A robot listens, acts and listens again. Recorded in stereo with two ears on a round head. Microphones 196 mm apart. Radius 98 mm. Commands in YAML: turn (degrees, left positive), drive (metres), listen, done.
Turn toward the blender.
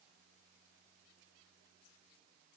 listen: true
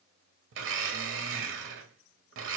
turn: -60
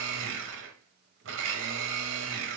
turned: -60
turn: -60
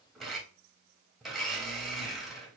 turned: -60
done: "Facing the blender, under 1 m away."